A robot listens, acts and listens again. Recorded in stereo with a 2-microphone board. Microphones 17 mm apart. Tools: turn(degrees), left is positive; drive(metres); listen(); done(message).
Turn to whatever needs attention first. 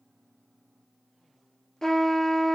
listen()
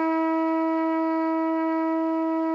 listen()
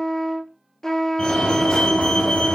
turn(degrees=70)
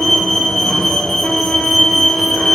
turn(degrees=30)
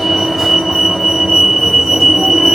turn(degrees=-10)
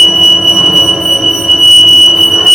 done("Found it: a fire alarm, straight ahead, over 4 m away.")